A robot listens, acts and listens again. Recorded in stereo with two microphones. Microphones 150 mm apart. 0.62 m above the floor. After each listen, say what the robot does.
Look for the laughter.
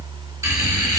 Turn 25° right.
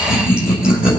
Found it: laughter, straight ahead, 2 to 4 m away.